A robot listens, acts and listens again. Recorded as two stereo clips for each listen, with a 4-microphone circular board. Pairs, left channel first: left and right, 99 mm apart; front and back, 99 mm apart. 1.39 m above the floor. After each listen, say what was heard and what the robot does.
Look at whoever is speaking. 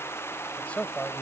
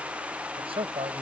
The man speaking: 165° left. Turn 165° left.
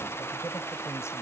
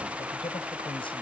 The man speaking is now 25° left. Turn 25° left.
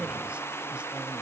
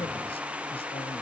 The man speaking is now 10° right. Turn 10° right.
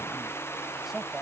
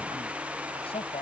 Facing the man speaking.